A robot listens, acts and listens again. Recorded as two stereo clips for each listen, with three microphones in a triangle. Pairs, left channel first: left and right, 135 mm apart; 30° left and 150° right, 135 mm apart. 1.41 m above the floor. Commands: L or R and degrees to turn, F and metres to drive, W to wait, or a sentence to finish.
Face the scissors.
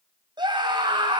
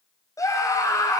W
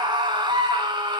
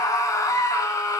W
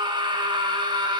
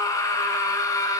I can't make out scissors, only a scream.